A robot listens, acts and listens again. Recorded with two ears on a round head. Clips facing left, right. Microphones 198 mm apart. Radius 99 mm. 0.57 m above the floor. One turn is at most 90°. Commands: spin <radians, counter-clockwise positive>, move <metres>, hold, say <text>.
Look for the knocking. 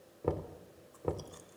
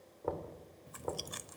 spin 0.70
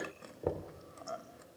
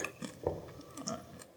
spin 0.17
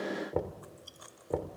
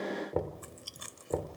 say Found it: knocking, straight ahead.